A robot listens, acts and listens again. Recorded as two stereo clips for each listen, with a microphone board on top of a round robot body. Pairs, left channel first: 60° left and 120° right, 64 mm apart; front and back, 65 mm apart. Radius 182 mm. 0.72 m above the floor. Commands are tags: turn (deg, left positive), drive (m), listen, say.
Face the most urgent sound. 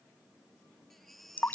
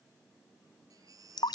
<turn deg="150"/>
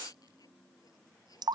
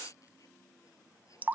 <listen/>
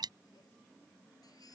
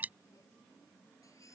<listen/>
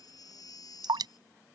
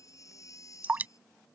<turn deg="40"/>
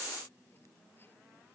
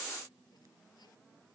<listen/>
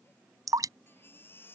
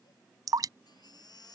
<say>Facing the baby crying.</say>